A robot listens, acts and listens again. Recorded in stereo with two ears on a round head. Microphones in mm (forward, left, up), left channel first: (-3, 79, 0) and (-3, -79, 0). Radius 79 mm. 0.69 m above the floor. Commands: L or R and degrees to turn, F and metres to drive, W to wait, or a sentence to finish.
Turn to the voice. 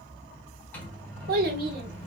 R60
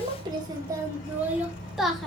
Found it: a child speaking, straight ahead, 1 to 2 m away.